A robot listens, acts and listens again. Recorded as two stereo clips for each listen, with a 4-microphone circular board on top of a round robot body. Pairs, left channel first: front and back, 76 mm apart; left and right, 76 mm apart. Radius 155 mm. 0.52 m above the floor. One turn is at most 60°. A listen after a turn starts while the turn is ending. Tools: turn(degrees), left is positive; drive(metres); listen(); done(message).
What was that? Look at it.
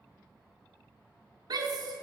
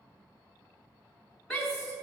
turn(degrees=60)
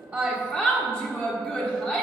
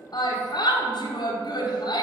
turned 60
turn(degrees=60)
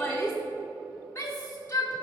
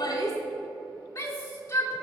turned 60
turn(degrees=55)
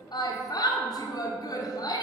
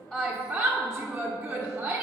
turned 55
turn(degrees=-10)
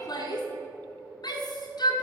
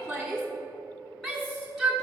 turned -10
done("Facing the shout, 1 to 2 m away.")